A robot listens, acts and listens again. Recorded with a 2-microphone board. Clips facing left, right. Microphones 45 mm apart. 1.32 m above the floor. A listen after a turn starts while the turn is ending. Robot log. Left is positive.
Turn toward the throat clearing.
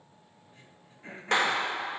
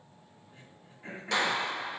cmd yaw -30
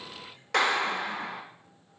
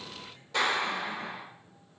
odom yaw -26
cmd idle
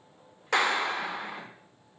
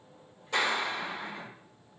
cmd idle
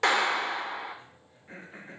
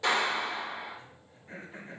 note: So it is at 15° left.
cmd yaw +15
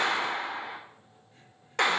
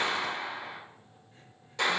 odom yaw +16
cmd idle
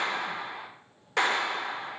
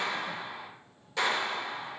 cmd idle
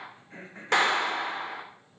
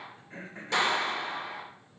end: Found it: throat clearing, straight ahead.